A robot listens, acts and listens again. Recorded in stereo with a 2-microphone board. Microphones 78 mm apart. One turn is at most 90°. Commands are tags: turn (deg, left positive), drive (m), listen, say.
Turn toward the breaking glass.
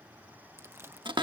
<listen/>
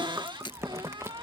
<turn deg="90"/>
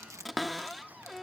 <say>I heard breaking glass from this way, but can't make it out now.</say>